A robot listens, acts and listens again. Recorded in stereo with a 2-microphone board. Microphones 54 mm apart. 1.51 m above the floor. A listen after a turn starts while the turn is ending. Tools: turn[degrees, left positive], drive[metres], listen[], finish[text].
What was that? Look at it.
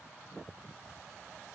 Action: listen[]
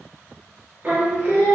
Thought: The singing: about 35° right or 145° right.
Action: turn[-35]
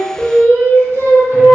Thought: So it is at 105° right.
Action: turn[-105]
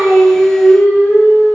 Action: finish[Facing the singing, 1 to 2 m away.]